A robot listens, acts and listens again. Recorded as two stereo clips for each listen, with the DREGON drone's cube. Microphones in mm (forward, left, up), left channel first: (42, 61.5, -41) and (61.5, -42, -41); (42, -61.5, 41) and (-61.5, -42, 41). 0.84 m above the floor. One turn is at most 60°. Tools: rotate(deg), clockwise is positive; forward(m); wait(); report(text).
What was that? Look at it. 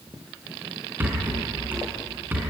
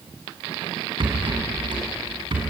rotate(60)
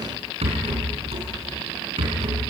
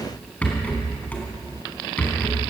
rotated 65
rotate(60)
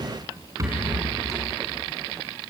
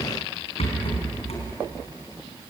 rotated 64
rotate(25)
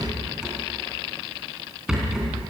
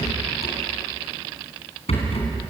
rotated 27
report("Found it: a rattle, straight ahead.")